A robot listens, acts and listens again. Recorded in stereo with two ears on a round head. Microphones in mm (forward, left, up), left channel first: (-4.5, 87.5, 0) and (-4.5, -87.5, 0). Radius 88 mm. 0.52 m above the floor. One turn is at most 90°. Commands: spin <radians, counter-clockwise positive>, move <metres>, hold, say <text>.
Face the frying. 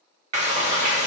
spin -0.61
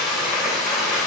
say Facing the frying.